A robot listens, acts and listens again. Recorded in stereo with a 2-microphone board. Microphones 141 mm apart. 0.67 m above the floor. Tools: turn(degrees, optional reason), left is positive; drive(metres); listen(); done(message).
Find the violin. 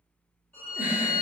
turn(degrees=30)
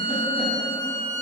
turn(degrees=135, reason="So it is at 135° left.")
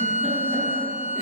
turn(degrees=40, reason="The violin is now 40° left.")
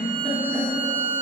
turn(degrees=10, reason="The violin is now 10° left.")
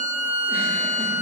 done("Facing the violin.")